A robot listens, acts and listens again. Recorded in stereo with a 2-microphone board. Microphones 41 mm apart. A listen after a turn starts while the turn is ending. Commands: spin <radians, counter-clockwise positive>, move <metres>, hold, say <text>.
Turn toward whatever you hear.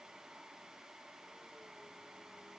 hold
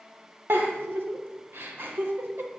spin -1.13
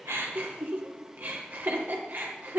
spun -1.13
spin -0.87
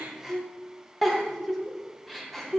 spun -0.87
say Found it: a giggle, straight ahead, 2 to 4 m away.